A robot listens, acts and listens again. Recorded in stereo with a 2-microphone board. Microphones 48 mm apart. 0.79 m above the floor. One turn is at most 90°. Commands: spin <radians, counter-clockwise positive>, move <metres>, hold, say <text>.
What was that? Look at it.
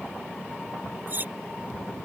spin -0.70
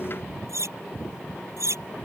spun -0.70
spin -1.57
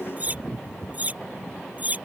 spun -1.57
spin -0.61
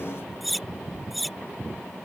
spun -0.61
say Facing the cutlery clinking.